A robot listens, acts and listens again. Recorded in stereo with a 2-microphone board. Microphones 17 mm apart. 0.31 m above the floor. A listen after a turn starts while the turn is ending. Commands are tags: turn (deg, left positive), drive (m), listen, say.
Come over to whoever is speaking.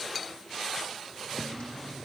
<listen/>
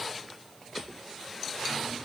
<listen/>
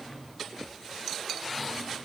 <say>I can't make out anyone speaking, only a drawer.</say>